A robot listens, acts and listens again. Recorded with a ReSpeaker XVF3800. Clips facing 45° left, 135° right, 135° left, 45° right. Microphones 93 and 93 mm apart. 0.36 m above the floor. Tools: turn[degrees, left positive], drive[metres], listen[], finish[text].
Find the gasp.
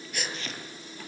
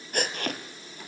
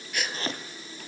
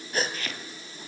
Thought: The gasp: 100° right.
Action: turn[-100]
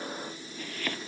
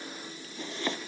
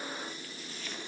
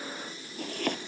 Action: finish[Facing where the gasp came from. I can't hear it now.]